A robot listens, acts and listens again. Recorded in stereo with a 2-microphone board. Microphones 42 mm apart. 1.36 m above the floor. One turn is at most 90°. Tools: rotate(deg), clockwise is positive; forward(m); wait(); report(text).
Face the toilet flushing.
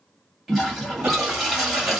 rotate(-30)
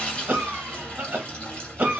rotate(-90)
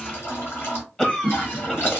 rotate(-85)
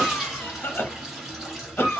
rotate(10)
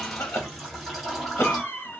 report("Found it: a toilet flushing, straight ahead, 1 to 2 m away.")